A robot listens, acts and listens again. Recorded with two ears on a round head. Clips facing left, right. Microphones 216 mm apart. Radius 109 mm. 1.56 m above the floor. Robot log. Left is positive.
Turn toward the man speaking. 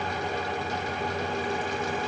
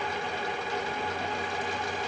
cmd idle
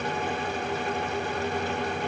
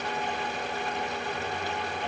cmd idle
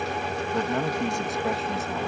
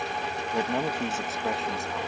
cmd yaw +30
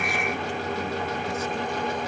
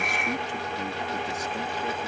cmd idle
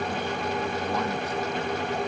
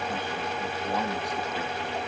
cmd idle
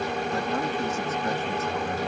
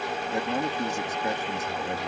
note: So it is at 15° right.
cmd yaw -15
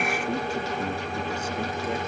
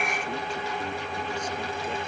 cmd idle
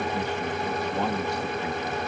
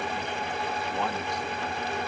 cmd idle
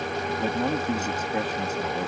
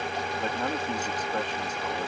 end: Found it: a man speaking, straight ahead.